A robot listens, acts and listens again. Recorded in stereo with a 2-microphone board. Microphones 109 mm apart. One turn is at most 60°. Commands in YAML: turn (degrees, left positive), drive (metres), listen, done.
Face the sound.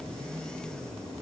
listen: true
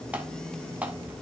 listen: true
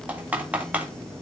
turn: -30
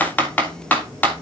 turn: 15
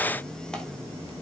listen: true
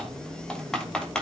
done: "Facing the typing on a keyboard."